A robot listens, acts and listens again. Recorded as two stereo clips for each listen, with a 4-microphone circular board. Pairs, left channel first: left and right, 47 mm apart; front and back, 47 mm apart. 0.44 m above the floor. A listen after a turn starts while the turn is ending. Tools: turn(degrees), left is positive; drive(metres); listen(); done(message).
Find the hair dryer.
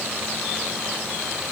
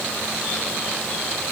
listen()
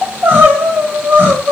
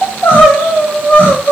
listen()
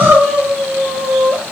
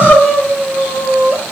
done("I can't make out a hair dryer to turn to.")